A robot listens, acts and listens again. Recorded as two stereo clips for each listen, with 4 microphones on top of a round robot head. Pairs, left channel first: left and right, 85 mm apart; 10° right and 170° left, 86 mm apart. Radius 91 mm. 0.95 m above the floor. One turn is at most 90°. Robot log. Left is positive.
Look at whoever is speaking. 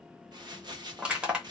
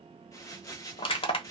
cmd idle
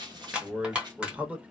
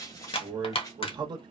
note: The man speaking: 165° right.
cmd yaw -90
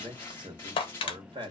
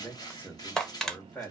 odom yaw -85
note: The man speaking is now 75° right.
cmd yaw -75
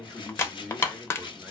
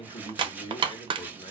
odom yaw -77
end: Facing the man speaking.